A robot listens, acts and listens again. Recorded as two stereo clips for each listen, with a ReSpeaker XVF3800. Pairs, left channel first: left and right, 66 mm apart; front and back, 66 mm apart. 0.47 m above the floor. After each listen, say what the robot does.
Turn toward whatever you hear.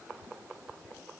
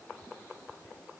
Keep listening.
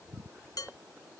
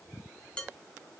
Turn 75° left.
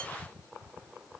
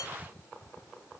Keep listening.
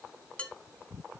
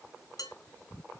Turn 20° left.
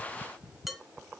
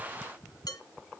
Facing the dishes clattering, 2 to 4 m away.